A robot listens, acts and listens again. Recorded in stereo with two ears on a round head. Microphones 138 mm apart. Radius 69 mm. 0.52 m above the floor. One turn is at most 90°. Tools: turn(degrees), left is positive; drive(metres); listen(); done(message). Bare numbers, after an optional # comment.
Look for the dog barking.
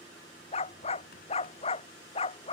# The dog barking: about 40° left or 140° left.
turn(40)
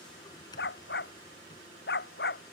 # So it is at 105° left.
turn(90)
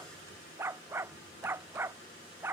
# The dog barking is now 15° right.
turn(-15)
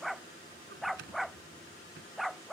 done("Facing the dog barking.")